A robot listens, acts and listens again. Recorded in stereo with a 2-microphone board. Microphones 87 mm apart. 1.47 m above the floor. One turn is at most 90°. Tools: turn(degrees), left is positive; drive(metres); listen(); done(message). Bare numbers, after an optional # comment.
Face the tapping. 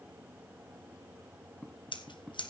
turn(30)
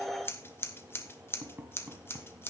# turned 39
# So it is at 25° right.
turn(-25)
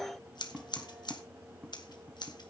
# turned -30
done("Found it: tapping, straight ahead, 2 to 4 m away.")